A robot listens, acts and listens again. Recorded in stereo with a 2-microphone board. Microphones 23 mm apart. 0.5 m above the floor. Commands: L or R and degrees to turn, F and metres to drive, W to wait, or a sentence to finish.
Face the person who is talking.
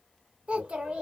R55
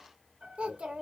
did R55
R65
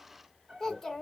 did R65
L20
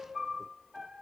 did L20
W
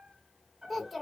Facing the child speaking, 1 to 2 m away.